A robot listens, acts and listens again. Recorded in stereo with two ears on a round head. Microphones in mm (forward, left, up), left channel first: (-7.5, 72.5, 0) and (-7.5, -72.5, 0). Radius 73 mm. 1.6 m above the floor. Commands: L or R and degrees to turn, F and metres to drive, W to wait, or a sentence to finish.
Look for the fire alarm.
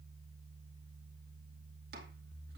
W
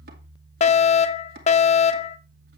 L40
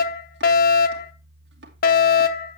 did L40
L90
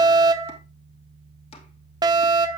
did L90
R30
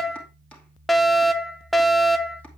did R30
Facing the fire alarm, under 1 m away.